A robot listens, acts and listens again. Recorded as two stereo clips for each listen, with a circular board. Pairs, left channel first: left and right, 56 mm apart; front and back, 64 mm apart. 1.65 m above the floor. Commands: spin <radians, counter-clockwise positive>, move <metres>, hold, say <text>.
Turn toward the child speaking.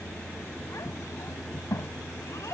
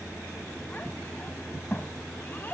spin 1.05
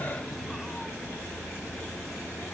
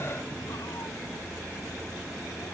hold
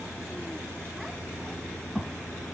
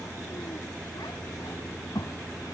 say Facing the child speaking.